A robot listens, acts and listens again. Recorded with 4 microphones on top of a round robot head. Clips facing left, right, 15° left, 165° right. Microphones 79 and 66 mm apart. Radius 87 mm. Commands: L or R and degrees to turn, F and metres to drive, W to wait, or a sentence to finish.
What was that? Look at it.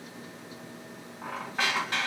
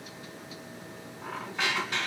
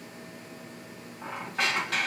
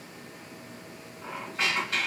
L45
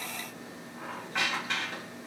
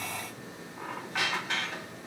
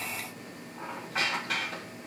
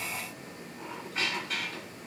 Found it: a squeak, straight ahead.